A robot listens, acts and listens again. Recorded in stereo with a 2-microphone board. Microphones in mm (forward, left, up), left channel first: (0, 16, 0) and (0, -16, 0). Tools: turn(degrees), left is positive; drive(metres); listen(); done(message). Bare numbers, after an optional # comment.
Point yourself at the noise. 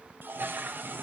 # The toilet flushing: about 70° right or 110° right.
turn(-70)
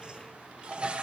# So it is at 35° right.
turn(-35)
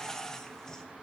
# The toilet flushing is now 15° left.
turn(15)
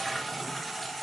done("Found it: a toilet flushing, straight ahead.")